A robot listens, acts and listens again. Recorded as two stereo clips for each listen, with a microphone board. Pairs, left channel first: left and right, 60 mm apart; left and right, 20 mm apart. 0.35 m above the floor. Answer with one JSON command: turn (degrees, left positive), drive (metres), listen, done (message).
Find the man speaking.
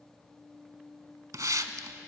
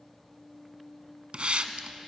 {"listen": true}
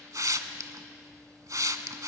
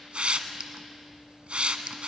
{"listen": true}
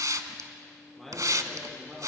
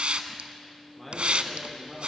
{"turn": 30}
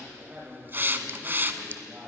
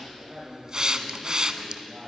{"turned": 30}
{"turn": -20}
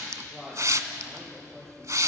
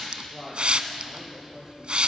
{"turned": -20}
{"done": "Facing the man speaking."}